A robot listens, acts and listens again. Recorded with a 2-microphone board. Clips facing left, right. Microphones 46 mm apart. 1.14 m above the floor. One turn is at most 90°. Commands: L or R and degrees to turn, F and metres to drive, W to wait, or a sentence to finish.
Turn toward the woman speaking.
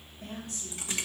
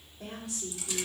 R90
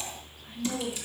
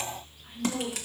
Facing the woman speaking, over 4 m away.